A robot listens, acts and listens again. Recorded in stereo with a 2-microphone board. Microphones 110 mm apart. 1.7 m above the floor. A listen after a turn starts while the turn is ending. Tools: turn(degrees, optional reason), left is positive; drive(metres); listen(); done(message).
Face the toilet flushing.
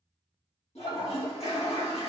turn(degrees=70, reason="The toilet flushing: about 70° left or 110° left.")
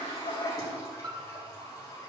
turn(degrees=35, reason="So it is at 35° left.")
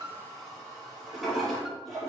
done("Found it: a toilet flushing, straight ahead, 2 to 4 m away.")